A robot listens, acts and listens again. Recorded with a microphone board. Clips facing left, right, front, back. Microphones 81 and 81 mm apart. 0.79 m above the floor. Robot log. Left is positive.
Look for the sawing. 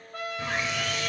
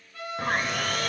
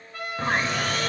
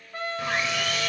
note: The sawing: 50° right.
cmd yaw -50
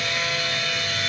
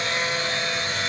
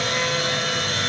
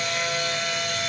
note: The sawing is now 30° right.
cmd yaw -30
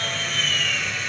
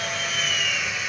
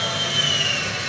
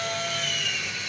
end: Found it: sawing, straight ahead, under 1 m away.